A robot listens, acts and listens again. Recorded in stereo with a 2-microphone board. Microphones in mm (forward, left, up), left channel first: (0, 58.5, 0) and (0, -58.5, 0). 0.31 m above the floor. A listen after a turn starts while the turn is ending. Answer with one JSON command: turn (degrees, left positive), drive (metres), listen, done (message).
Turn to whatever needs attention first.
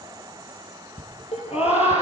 {"turn": 60}
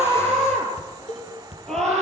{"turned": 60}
{"done": "Found it: a scream, straight ahead, over 4 m away."}